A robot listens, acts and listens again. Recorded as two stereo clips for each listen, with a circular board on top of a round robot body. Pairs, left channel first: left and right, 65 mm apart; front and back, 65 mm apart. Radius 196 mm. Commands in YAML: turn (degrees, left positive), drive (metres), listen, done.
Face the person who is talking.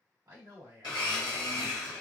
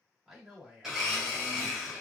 turn: -95
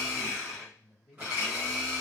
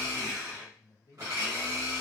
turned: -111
turn: 20
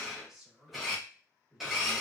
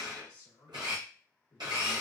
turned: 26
done: "Found it: a man speaking, straight ahead."